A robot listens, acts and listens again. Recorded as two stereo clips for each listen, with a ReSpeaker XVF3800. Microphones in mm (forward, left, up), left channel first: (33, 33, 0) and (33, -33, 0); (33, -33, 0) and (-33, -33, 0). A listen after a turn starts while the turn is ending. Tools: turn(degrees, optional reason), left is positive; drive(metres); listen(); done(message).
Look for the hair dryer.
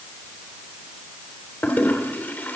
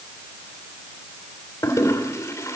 listen()
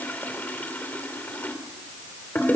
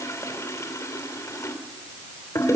listen()
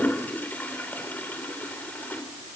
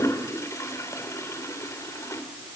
done("I can't make out a hair dryer, only a toilet flushing.")